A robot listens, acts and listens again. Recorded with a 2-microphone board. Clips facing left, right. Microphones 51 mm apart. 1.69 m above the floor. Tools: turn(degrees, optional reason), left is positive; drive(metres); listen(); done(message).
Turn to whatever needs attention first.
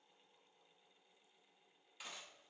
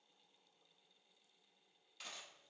listen()
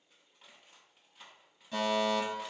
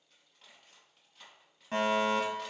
turn(degrees=-50, reason="The fire alarm: about 50° right or 130° right.")
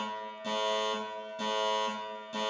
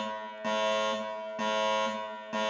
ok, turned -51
turn(degrees=-75, reason="So it is at 75° right.")
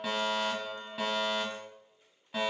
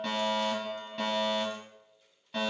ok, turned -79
done("Facing the fire alarm, 1 to 2 m away.")